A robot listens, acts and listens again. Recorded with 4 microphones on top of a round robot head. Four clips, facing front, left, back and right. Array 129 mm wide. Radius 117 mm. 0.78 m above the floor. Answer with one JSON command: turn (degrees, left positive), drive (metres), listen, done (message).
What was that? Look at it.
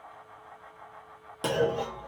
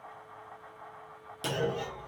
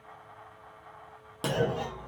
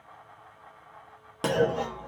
{"turn": -95}
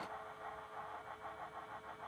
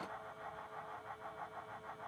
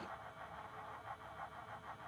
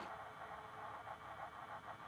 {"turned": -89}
{"done": "I heard a clunk from this way, but can't make it out now."}